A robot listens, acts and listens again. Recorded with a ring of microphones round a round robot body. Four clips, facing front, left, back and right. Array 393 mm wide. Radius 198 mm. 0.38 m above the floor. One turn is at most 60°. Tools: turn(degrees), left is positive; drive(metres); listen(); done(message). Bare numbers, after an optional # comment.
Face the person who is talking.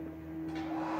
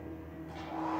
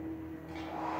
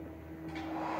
listen()
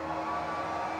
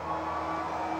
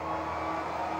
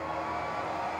listen()
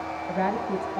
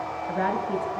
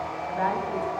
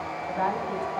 # The woman speaking: 35° left.
turn(35)
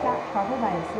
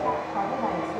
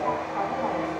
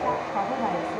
done("Facing the woman speaking.")